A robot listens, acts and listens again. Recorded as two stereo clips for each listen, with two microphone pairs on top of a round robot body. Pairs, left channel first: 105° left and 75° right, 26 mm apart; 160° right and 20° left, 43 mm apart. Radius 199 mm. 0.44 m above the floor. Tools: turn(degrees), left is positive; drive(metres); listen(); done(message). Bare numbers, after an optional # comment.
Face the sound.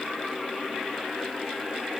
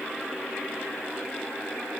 listen()
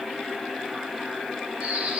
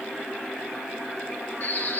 # The bird: 120° right.
turn(-120)
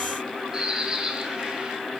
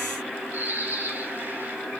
# The bird is now 15° right.
turn(-15)
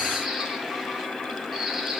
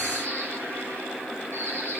done("Found it: a bird, straight ahead, 2 to 4 m away.")